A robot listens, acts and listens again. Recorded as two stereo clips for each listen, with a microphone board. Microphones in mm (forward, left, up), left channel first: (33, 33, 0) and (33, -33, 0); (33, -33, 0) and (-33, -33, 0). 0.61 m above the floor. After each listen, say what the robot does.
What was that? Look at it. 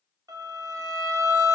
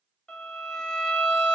Turn 75° right.
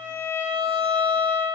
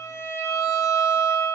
Turn 30° left.
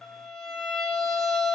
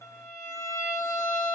Turn 10° left.
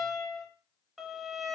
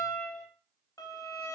Facing the violin.